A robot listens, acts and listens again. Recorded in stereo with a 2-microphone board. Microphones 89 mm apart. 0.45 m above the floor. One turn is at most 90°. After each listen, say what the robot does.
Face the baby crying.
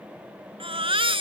Turn 90° right.
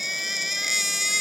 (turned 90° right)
Found it: a baby crying, straight ahead.